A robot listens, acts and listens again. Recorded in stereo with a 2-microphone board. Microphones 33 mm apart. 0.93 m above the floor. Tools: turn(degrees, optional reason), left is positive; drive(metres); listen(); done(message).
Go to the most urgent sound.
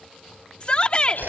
turn(degrees=35, reason="The shout: about 35° left or 145° left.")
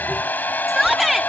drive(metres=1.0)
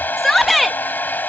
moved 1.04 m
drive(metres=1.0)
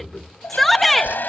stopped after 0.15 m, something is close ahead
done("I am next to the shout.")